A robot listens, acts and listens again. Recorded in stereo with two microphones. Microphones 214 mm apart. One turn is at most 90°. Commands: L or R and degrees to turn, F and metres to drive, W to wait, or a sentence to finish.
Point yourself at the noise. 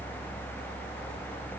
W
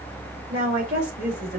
R50
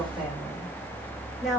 Facing the woman speaking, 2 to 4 m away.